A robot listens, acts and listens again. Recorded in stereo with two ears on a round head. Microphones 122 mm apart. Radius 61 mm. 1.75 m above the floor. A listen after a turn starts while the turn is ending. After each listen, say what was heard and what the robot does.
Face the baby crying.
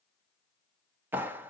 Keep listening.
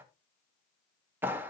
Keep listening.
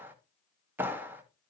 I can't make out a baby crying, only a clap.